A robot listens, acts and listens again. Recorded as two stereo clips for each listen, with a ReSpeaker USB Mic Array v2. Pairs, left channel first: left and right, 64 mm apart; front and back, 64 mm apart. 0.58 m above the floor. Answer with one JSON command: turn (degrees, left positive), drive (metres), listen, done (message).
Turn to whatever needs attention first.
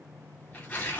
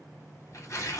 {"listen": true}
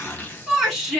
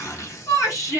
{"turn": -10}
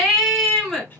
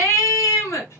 {"done": "Found it: a shout, straight ahead, 1 to 2 m away."}